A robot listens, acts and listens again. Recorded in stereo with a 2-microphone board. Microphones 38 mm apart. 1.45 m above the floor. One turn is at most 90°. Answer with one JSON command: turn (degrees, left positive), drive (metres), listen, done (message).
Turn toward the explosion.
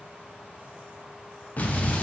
{"turn": 40}
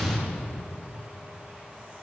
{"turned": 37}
{"done": "Found it: an explosion, straight ahead."}